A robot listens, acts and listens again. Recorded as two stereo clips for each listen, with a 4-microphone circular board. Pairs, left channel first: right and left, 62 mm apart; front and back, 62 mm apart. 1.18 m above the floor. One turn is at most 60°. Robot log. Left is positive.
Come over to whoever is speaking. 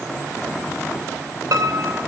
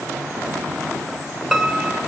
cmd idle
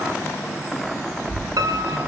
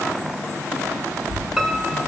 note: The child speaking: 85° right.
cmd yaw -60
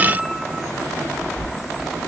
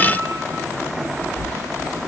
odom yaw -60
cmd fwd 1.0
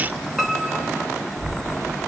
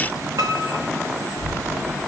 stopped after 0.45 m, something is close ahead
end: Blocked. The child speaking is further on, straight ahead.